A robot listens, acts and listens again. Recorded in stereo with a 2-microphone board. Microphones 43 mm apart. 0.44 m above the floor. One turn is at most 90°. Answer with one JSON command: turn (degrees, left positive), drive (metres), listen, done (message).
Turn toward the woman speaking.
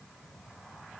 {"listen": true}
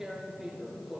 {"listen": true}
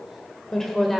{"turn": 30}
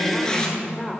{"turn": 30}
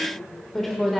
{"turn": 30}
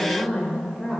{"turn": 30}
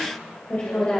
{"turn": 90}
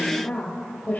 {"turn": 35}
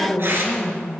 {"turn": 15}
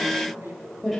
{"done": "Facing the woman speaking."}